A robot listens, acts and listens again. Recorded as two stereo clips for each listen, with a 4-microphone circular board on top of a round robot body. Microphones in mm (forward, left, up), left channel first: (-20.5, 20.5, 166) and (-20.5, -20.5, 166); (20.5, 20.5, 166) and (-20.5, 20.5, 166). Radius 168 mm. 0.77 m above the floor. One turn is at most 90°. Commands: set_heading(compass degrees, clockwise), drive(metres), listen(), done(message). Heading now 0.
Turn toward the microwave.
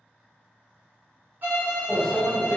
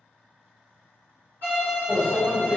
set_heading(270)
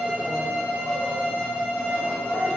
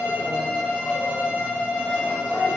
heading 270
set_heading(200)
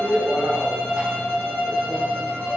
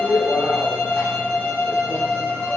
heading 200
set_heading(215)
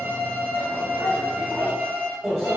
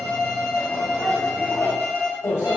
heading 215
done("Found it: a microwave, straight ahead, 1 to 2 m away.")